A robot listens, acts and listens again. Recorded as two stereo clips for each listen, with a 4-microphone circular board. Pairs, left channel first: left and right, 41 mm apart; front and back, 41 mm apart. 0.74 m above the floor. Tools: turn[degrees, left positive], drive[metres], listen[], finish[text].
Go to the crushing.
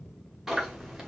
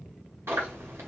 Action: listen[]
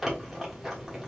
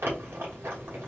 Action: listen[]
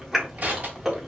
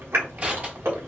Thought: The crushing: 135° right.
Action: turn[-135]
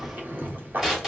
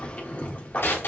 Thought: The crushing is now 15° right.
Action: turn[-15]
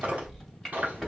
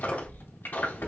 Action: drive[1.0]
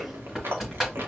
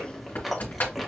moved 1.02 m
Thought: The crushing is now 10° right.
Action: turn[-10]
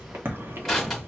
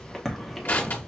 Action: drive[1.0]
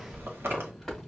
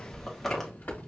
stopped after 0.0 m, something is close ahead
Action: finish[Arrived at the crushing, straight ahead.]